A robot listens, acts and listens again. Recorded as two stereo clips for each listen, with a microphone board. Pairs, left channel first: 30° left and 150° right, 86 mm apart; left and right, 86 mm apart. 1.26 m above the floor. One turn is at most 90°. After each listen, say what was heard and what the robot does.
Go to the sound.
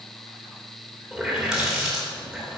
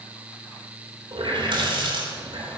The running tap: 70° right. Turn 70° right.
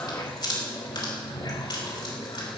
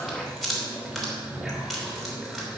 Drive 1.0 m forward.
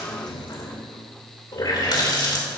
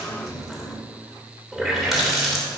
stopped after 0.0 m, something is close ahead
Blocked. The running tap is further on, straight ahead.